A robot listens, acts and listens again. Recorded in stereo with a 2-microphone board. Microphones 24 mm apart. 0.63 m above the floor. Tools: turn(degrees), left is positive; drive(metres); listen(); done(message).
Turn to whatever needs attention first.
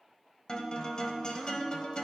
listen()
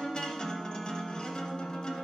listen()
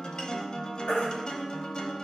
turn(degrees=75)
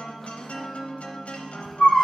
turn(degrees=15)
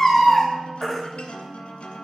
done("Facing the baby crying.")